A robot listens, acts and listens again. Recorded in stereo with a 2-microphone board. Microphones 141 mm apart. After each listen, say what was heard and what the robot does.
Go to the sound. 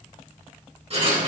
The writing: about 45° right or 135° right. Turn 45° right.
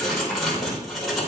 Drive 1.0 m forward.
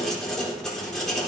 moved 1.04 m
Drive 1.0 m forward.
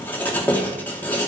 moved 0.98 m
The writing is now 15° left. Turn 15° left.
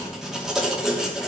Drive 1.0 m forward.
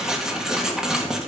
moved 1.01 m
Drive 1.0 m forward.
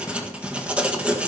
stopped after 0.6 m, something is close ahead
The writing is now 10° right. Turn 10° right.
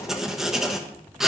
Arrived at the writing, straight ahead.